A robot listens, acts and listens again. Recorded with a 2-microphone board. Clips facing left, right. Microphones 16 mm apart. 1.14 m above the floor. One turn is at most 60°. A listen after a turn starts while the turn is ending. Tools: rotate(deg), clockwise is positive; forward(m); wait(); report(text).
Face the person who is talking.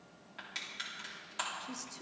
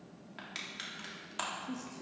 rotate(-35)
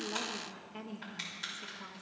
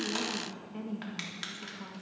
report("Facing the woman speaking.")